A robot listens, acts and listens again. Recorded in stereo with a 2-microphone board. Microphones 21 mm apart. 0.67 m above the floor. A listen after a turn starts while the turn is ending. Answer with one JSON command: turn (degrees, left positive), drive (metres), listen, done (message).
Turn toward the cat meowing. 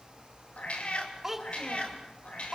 {"turn": 65}
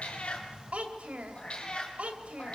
{"turn": 55}
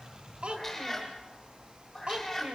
{"turn": 10}
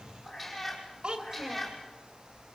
{"done": "Facing the cat meowing, over 4 m away."}